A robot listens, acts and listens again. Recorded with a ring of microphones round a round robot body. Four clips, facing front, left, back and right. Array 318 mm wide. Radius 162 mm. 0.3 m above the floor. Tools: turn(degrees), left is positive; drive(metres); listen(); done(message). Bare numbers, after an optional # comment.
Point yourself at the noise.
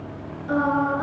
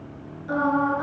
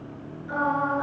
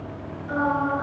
# The singing: 30° left.
turn(30)
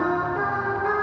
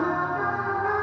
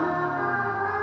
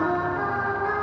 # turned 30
done("Facing the singing.")